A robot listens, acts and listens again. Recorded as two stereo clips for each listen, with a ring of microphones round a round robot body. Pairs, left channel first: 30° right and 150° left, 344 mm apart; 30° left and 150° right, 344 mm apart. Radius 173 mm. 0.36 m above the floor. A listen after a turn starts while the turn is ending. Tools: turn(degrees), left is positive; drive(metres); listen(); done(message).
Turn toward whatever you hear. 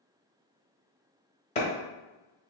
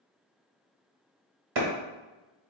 turn(degrees=-100)
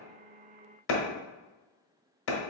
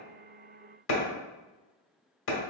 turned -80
turn(degrees=-20)
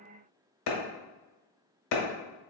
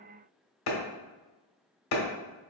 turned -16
done("Found it: a clap, straight ahead.")